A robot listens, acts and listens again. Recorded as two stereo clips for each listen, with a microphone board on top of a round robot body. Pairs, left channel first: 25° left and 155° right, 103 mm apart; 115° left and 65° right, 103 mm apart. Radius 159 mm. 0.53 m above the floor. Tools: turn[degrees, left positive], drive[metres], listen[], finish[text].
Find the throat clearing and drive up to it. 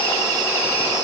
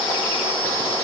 Action: listen[]
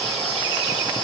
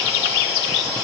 Action: listen[]
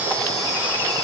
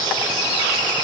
Action: finish[I can't make out throat clearing to turn to.]